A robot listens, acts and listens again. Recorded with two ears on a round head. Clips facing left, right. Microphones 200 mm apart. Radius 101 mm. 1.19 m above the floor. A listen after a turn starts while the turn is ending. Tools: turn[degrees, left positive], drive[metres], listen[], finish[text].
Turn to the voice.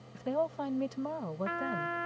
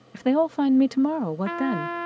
Action: turn[-90]
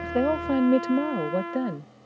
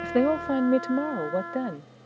Action: finish[Found it: a woman speaking, straight ahead.]